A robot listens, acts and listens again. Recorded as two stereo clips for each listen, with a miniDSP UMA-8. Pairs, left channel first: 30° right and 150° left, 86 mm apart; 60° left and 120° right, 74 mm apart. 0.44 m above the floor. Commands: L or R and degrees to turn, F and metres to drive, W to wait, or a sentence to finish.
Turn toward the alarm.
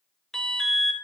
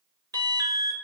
R115
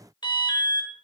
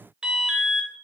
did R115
R40
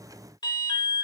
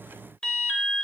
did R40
R15
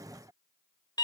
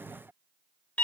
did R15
R10
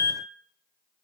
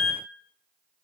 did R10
Facing the alarm, under 1 m away.